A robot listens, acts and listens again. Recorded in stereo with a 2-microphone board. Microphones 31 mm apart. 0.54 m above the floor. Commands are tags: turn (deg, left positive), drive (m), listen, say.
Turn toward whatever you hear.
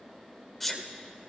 <turn deg="30"/>
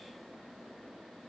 <listen/>
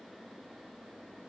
<say>I heard a sneeze, but can't make it out now. It was about 25° right or 145° left.</say>